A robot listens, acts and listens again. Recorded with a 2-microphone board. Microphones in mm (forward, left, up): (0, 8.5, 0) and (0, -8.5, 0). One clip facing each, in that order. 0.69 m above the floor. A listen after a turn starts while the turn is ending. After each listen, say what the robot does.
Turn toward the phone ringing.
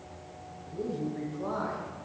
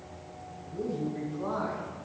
Keep listening.
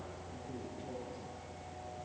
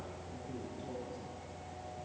Keep listening.
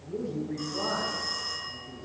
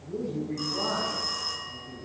Turn 35° right.
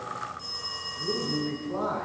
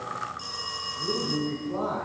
Turn 110° right.
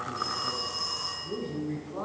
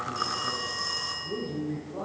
Found it: a phone ringing, straight ahead, over 4 m away.